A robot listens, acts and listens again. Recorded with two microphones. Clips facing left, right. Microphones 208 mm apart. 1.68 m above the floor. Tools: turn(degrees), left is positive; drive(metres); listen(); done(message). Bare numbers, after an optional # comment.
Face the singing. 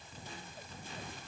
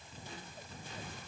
listen()
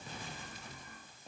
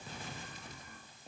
listen()
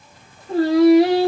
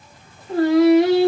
# The singing: about 35° left or 145° left.
turn(35)
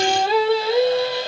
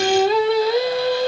# So it is at 20° left.
turn(20)
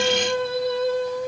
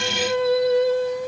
# The singing is now 10° right.
turn(-10)
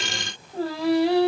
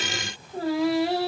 done("Facing the singing, 2 to 4 m away.")